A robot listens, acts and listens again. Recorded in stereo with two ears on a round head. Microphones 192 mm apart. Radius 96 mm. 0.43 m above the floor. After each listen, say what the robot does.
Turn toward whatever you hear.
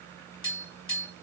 Turn 25° left.
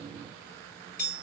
Turn 130° left.
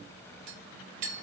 Turn 45° right.
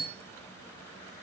Turn 15° right.
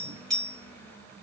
Found it: tapping, straight ahead, 1 to 2 m away.